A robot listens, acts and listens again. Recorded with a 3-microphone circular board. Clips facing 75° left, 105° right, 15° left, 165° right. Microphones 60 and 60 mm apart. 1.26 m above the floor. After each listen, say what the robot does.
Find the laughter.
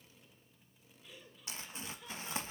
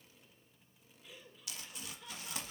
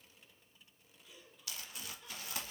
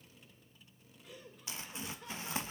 Turn 160° left.
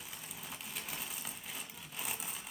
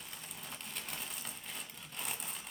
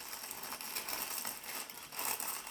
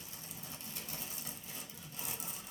Keep listening.
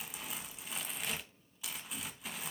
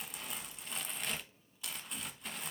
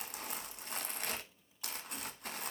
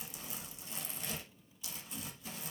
Keep listening.
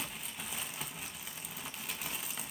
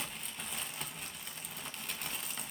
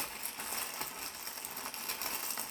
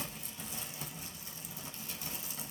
I heard laughter from this way, but can't make it out now.